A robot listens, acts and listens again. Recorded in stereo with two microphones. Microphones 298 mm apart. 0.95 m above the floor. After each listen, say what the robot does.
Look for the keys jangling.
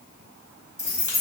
Turn 30° right.
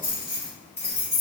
Turn 45° left.
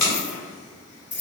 Turn 40° left.
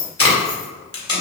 Turn 15° left.
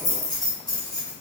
Turn 15° left.
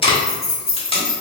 Facing the keys jangling, 1 to 2 m away.